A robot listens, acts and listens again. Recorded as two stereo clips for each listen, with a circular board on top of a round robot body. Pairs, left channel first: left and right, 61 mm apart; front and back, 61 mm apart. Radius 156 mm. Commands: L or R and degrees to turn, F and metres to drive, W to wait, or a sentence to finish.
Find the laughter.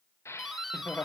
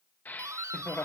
L45
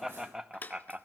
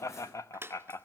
R20
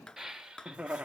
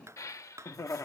R20
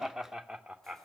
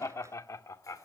R10
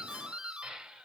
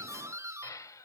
R10
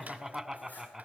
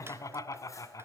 Found it: laughter, straight ahead.